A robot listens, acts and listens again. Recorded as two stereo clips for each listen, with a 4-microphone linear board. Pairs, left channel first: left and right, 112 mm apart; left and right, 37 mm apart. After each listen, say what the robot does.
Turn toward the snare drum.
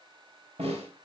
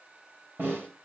Turn 65° right.
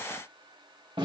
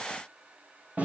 Turn 50° right.
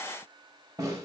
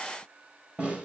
Turn 30° right.
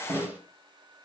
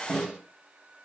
Turn 15° right.
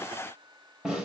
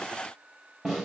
Found it: a snare drum, straight ahead, 2 to 4 m away.